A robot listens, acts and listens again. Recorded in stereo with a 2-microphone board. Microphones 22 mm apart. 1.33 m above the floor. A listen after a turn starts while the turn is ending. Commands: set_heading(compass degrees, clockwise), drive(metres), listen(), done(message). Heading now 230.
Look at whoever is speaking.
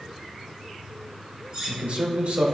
set_heading(320)
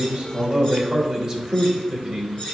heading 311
set_heading(326)
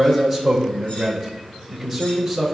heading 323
done("Facing the man speaking, 2 to 4 m away.")